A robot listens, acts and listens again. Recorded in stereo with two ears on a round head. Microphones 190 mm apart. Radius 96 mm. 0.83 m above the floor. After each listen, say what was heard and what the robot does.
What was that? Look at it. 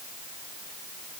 Keep listening.
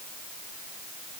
Keep listening.
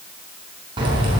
The keys jangling: about 25° right or 155° right. Turn 25° right.
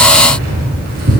So it is at 130° right. Turn 130° right.
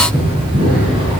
The keys jangling is now 25° right. Turn 25° right.
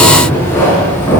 The keys jangling is now 10° left. Turn 10° left.
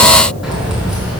Facing the keys jangling.